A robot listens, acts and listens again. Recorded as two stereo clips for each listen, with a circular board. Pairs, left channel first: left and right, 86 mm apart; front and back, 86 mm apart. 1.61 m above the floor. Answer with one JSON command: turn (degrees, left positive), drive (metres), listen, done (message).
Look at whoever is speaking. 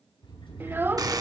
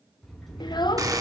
{"turn": -25}
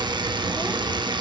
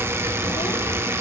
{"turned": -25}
{"listen": true}
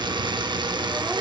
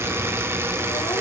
{"listen": true}
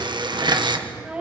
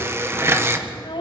{"turn": -10}
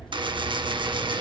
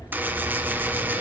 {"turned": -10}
{"listen": true}
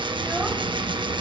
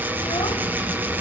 {"listen": true}
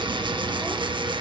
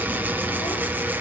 {"done": "I heard a child speaking from this way, but can't make it out now."}